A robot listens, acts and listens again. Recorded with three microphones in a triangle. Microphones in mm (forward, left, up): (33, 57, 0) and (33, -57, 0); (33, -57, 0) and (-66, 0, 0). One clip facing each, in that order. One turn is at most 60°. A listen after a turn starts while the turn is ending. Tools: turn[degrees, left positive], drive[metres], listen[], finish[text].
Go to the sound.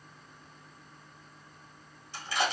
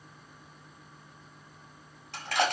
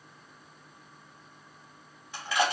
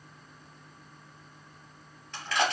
Thought: The crushing: 110° right.
Action: turn[-60]
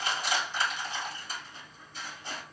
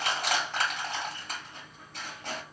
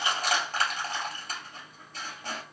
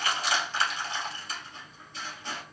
Thought: The crushing is now 70° right.
Action: turn[-60]
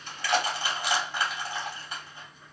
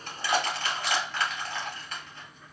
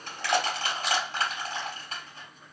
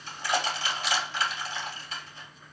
Thought: The crushing is now 15° left.
Action: turn[15]
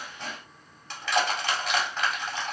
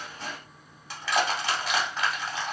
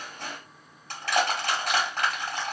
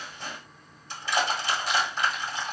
Action: drive[1.0]
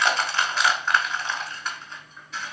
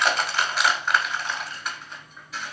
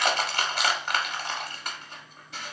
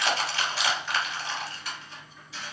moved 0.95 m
Action: drive[1.0]
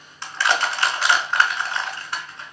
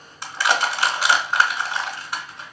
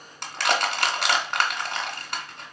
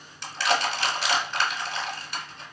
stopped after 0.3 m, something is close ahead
Thought: The crushing is now 10° right.
Action: turn[-10]
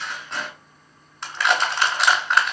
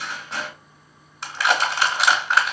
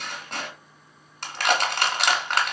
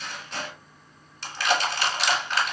Action: finish[Arrived at the crushing, straight ahead.]